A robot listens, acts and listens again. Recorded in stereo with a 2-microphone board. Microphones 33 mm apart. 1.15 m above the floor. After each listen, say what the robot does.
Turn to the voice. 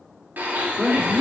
Turn 15° left.
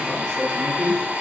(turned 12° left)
Turn 155° left.
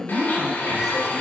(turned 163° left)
Turn 10° right.
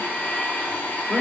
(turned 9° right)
Facing the woman speaking, 2 to 4 m away.